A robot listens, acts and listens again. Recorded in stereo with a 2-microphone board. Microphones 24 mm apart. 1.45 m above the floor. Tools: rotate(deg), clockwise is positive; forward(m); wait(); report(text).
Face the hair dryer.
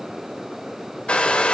rotate(-50)
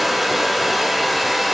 report("Found it: a hair dryer, straight ahead.")